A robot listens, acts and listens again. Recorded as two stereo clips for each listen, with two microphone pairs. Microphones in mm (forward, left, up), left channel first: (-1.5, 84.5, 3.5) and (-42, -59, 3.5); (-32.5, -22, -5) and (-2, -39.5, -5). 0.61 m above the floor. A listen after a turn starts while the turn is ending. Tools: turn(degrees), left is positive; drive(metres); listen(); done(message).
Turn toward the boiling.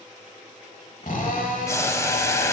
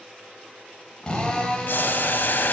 turn(degrees=145)
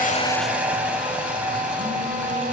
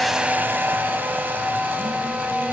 listen()
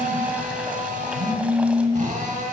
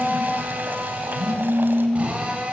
listen()
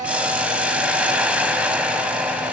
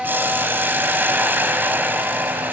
turn(degrees=-25)
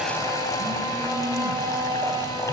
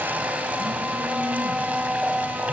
listen()
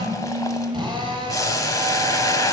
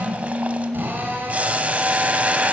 turn(degrees=10)
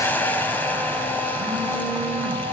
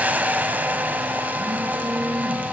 done("Facing the boiling.")